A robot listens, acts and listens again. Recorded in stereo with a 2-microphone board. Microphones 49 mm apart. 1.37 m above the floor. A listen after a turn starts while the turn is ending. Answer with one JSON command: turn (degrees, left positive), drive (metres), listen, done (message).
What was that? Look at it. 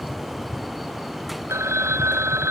{"turn": -90}
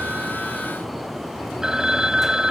{"turn": -10}
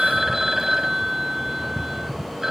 {"done": "Facing the phone ringing."}